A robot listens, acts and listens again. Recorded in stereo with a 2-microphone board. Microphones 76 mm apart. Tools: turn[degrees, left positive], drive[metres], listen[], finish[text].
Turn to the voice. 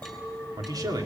Thought: The man speaking: about 55° right or 125° right.
Action: turn[-55]
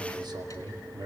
Thought: So it is at 70° right.
Action: turn[-70]
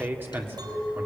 Thought: The man speaking is now 25° right.
Action: turn[-25]
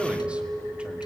Action: listen[]
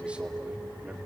Thought: The man speaking is now 15° right.
Action: turn[-15]
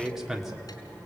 Action: finish[Facing the man speaking.]